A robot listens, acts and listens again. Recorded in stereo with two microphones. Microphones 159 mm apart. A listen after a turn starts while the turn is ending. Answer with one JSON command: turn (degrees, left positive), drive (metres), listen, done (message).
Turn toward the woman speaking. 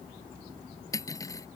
{"listen": true}
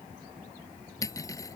{"listen": true}
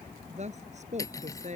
{"turn": -50}
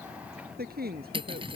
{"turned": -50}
{"turn": -75}
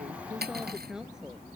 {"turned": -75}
{"done": "Facing the woman speaking."}